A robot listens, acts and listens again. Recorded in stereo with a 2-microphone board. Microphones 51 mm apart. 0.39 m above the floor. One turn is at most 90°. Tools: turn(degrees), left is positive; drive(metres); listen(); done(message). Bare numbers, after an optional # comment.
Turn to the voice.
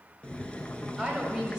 turn(-30)
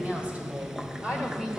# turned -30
turn(-30)
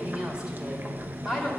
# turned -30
turn(30)
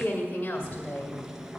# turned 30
# So it is at 145° left.
turn(90)
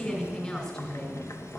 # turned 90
# The woman speaking is now 20° left.
turn(20)
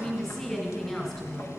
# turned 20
# The woman speaking is now 15° left.
turn(15)
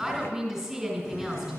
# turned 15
done("Found it: a woman speaking, straight ahead, 2 to 4 m away.")